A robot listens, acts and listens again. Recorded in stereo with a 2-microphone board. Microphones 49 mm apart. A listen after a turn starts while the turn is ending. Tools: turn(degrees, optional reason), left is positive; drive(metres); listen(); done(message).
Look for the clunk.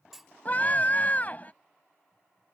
turn(degrees=-30)
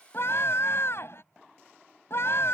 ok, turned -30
listen()
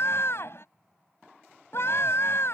done("I heard a clunk, but can't make it out now. It was about 25° left or 145° right.")